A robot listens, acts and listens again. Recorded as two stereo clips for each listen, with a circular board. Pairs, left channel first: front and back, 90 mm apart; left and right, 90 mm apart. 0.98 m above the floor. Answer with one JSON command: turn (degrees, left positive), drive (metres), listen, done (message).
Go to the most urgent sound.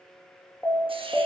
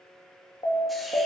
{"turn": 65}
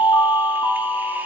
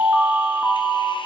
{"drive": 1.0}
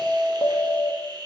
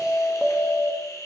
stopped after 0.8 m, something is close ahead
{"done": "Arrived at the alarm, straight ahead."}